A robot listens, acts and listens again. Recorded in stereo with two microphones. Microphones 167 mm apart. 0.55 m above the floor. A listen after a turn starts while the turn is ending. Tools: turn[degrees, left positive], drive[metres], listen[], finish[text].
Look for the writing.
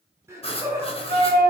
Thought: The writing: about 35° left or 145° left.
Action: turn[35]
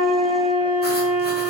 Action: listen[]
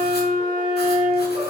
Action: listen[]
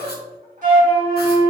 Action: finish[I heard writing, but can't make it out now. It was about straight ahead or 110° left.]